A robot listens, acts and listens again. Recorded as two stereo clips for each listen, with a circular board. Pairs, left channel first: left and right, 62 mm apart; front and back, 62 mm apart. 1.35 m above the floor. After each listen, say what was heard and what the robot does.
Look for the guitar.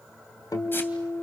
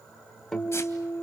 The guitar: 85° left. Turn 85° left.
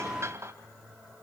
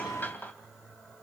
Keep listening.
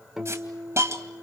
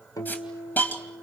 The guitar is now 10° right. Turn 10° right.
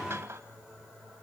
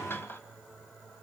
Keep listening.
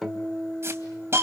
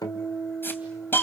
Facing the guitar.